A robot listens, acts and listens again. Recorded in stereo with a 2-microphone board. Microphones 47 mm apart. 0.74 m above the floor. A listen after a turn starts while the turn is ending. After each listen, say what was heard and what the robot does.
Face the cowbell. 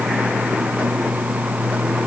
Keep listening.
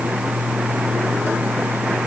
Keep listening.
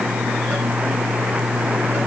I can't make out a cowbell.